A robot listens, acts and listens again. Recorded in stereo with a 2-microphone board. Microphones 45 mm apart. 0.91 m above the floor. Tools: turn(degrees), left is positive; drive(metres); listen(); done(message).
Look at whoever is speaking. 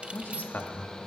turn(degrees=45)
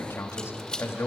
turn(degrees=85)
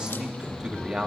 turn(degrees=-20)
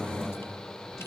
listen()
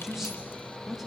turn(degrees=-10)
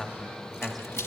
done("Found it: a man speaking, straight ahead, 1 to 2 m away.")